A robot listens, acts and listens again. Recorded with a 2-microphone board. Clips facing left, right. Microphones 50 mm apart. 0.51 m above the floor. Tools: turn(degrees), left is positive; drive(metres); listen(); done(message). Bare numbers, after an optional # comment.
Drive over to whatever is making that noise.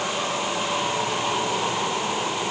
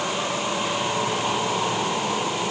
listen()
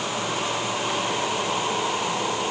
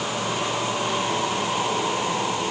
listen()
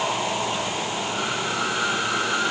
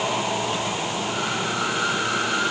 done("I can't make out anything to turn to.")